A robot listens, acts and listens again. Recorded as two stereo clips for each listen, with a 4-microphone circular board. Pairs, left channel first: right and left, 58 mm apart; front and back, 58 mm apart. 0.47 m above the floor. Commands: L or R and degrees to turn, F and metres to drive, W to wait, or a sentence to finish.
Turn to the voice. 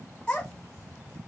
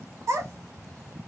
R165
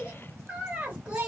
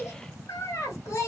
L15
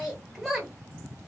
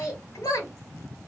Found it: a child speaking, straight ahead, 1 to 2 m away.